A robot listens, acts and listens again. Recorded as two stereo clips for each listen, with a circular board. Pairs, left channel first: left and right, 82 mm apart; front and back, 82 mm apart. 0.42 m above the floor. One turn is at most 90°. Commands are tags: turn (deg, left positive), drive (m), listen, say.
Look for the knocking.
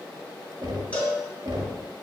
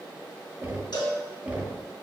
<turn deg="-90"/>
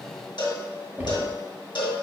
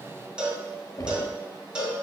<turn deg="-30"/>
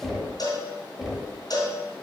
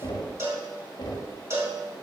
<turn deg="-10"/>
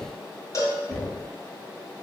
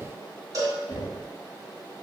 <say>Facing the knocking, 1 to 2 m away.</say>